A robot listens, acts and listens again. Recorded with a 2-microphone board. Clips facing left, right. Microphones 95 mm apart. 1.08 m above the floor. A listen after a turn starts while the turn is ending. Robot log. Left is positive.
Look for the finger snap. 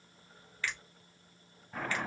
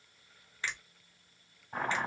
note: The finger snap: about 25° right or 155° right.
cmd yaw -25
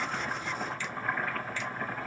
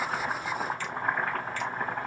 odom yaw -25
cmd idle
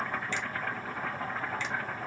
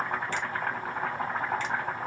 cmd idle
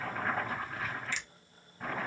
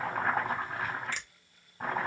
note: So it is at 130° right.
cmd yaw -130
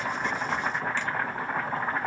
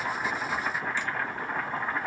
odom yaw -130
cmd idle
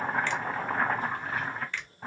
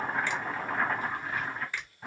note: The finger snap is now 10° right.
cmd yaw -10
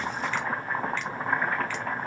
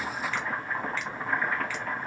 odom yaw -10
cmd idle
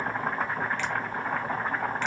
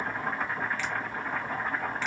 cmd idle
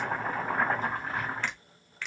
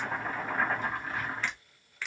end: Facing the finger snap, under 1 m away.